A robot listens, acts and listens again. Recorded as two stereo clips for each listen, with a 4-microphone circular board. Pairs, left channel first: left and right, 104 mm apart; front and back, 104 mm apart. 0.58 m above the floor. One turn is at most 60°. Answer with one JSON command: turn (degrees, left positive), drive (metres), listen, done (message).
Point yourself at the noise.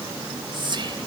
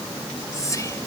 {"turn": -55}
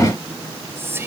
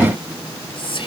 {"turn": -25}
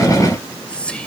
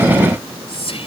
{"turn": 10}
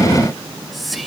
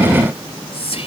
{"done": "Found it: whispering, straight ahead."}